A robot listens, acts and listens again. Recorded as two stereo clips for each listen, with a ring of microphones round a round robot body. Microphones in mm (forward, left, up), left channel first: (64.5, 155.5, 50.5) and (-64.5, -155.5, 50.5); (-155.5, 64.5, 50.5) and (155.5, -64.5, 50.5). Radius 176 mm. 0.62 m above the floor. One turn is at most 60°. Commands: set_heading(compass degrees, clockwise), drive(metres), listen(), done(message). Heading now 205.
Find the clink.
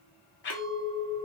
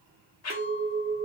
set_heading(265)
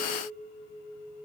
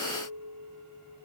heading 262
set_heading(297)
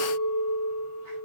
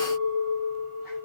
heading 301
done("Facing the clink, 1 to 2 m away.")